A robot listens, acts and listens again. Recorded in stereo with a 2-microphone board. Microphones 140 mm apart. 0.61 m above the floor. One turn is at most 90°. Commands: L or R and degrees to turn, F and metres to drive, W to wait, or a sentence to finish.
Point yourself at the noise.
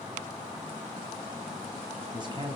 R35
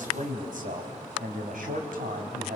R90
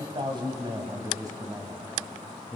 R20
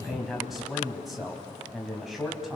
Found it: a man speaking, straight ahead, 2 to 4 m away.